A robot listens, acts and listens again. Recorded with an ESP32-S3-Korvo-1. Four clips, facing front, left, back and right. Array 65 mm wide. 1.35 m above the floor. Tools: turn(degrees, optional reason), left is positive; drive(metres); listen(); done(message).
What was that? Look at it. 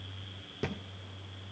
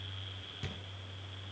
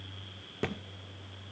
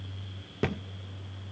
turn(degrees=-115, reason="The thud: 115° right.")
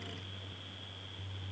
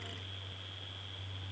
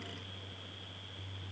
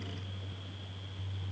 done("I heard a thud from this way, but can't make it out now.")